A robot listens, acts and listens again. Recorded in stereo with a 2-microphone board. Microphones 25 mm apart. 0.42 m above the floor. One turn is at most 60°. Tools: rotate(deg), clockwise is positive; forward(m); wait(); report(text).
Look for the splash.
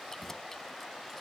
wait()
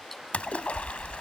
rotate(-60)
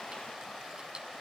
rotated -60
wait()
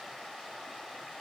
report("I heard a splash, but can't make it out now. It was about 10° left or 50° left.")